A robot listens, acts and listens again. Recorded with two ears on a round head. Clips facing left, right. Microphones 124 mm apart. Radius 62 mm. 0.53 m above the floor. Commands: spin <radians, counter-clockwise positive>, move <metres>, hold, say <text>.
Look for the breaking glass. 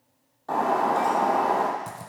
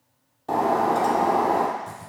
spin -0.35
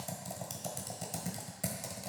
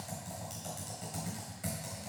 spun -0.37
hold
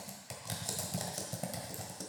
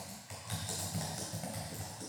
say I heard breaking glass, but can't make it out now. It was about straight ahead or 140° right.